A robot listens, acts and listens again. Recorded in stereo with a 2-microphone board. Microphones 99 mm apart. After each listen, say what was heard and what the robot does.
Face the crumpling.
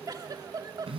Keep listening.
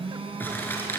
The crumpling: about 20° left or 160° left. Turn 20° left.
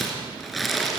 Found it: crumpling, straight ahead.